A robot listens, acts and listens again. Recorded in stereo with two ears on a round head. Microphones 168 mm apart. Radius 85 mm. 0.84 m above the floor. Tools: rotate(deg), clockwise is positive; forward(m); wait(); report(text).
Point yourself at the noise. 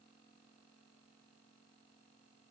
wait()
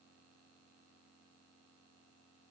wait()
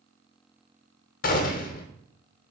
rotate(-50)
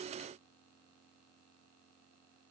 wait()
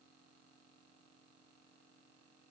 report("I heard a gunshot, but can't make it out now. It was about straight ahead or 80° left.")